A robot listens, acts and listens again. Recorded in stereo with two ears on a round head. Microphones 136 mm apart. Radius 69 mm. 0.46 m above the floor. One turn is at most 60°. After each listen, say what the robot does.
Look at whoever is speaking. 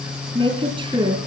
Turn 30° right.
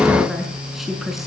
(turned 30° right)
Found it: a woman speaking, straight ahead.